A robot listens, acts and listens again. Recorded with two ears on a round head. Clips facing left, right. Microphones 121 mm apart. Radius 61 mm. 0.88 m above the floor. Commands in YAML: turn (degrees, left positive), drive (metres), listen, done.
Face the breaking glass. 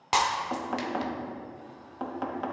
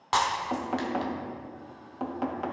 turn: 15
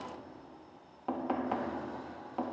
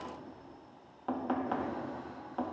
listen: true
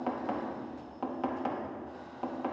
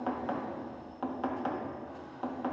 done: "I heard breaking glass, but can't make it out now. It was about straight ahead or 150° left."